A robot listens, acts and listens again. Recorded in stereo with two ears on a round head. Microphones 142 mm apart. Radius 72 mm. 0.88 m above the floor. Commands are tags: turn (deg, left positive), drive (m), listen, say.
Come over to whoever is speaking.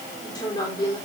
<turn deg="30"/>
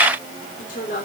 <turn deg="120"/>
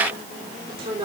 <turn deg="-35"/>
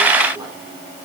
<listen/>
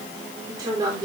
<turn deg="-25"/>
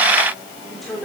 <drive m="1.0"/>
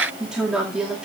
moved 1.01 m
<drive m="1.0"/>
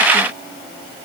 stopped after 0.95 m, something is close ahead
<listen/>
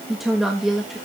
<say>Arrived at the woman speaking, straight ahead.</say>